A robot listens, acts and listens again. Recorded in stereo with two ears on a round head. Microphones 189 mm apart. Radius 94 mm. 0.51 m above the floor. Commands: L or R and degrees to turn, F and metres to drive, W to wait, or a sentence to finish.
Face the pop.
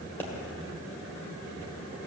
L30
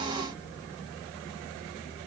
W
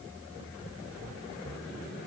I heard a pop, but can't make it out now. It was about 20° right or 140° left.